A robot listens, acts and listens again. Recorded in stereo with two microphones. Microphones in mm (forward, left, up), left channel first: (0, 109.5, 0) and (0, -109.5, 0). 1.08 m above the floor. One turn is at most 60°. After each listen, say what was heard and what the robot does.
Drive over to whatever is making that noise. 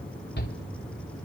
The shout: about 50° left or 130° left. Turn 50° left.
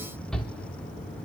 Drive 1.0 m forward.
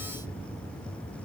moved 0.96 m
Keep listening.
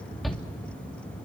Drive 1.0 m forward.
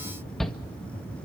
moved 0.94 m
Drive 1.0 m forward.
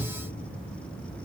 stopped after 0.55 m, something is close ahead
I am next to the shout.